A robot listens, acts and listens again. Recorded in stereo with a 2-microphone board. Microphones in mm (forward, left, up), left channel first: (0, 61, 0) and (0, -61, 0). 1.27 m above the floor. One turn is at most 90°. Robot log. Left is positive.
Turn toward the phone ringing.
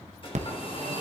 note: The phone ringing: about 75° right or 105° right.
cmd yaw -75
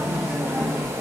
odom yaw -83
end: Found it: a phone ringing, straight ahead, under 1 m away.